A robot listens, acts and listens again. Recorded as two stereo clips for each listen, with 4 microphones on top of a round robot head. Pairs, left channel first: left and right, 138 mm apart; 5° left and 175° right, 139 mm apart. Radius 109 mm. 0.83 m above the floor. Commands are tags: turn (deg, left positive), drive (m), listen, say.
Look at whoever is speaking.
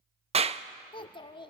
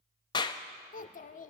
<turn deg="35"/>
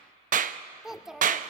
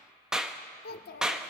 <say>Found it: a child speaking, straight ahead.</say>